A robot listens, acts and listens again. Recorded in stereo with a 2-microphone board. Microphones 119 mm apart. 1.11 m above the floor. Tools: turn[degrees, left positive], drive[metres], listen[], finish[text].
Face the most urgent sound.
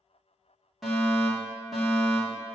Action: turn[30]
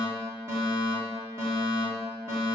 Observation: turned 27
Thought: So it is at 25° right.
Action: turn[-25]
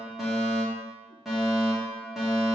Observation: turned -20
Action: finish[Facing the fire alarm.]